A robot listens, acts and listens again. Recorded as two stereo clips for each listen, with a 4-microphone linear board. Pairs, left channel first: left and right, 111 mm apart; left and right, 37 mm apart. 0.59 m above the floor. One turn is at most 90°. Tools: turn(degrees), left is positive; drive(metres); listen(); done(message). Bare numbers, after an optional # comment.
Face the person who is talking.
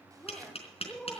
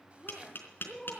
turn(30)
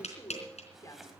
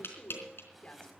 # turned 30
# So it is at 145° left.
turn(90)
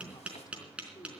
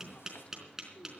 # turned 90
# The woman speaking is now 45° left.
turn(45)
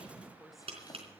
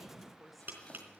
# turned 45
done("Found it: a woman speaking, straight ahead.")